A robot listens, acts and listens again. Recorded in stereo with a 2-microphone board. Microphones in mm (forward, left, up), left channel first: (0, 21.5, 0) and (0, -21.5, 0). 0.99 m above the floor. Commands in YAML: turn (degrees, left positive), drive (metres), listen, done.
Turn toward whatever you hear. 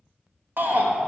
turn: -55
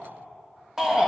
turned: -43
turn: -15
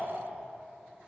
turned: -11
listen: true
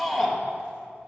done: "Found it: a shout, straight ahead, 1 to 2 m away."